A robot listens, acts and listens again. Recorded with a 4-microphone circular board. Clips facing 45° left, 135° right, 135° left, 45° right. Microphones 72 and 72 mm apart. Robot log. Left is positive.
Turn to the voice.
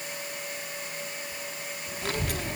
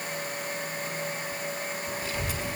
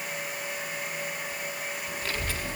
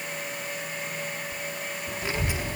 note: The child speaking: 25° left.
cmd yaw +25
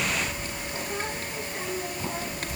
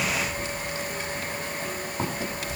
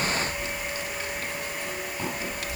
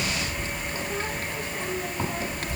end: Facing the child speaking.